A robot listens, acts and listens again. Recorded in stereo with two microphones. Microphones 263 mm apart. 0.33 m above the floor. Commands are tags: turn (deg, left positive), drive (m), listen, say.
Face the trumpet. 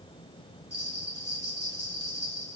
<listen/>
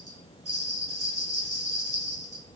<listen/>
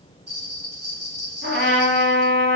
<turn deg="-40"/>
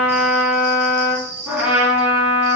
<say>Facing the trumpet, 1 to 2 m away.</say>